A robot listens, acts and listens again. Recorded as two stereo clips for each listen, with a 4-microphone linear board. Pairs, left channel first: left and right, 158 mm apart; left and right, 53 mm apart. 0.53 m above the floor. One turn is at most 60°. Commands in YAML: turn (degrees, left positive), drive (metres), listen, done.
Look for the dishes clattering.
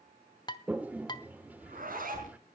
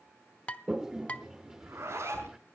turn: 25
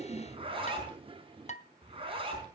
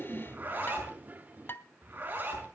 turn: 60
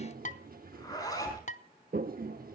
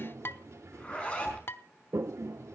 turn: 60
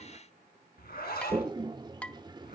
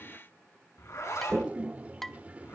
turn: 10
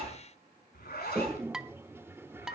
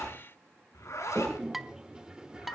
done: "Found it: dishes clattering, straight ahead, under 1 m away."